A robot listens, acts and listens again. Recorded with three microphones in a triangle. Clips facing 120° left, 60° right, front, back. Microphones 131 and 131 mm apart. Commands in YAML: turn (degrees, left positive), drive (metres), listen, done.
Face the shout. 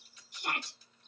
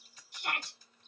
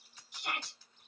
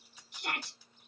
turn: -175
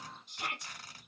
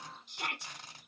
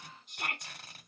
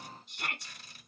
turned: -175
turn: -65
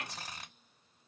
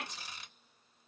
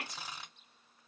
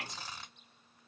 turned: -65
done: "Facing the shout, 1 to 2 m away."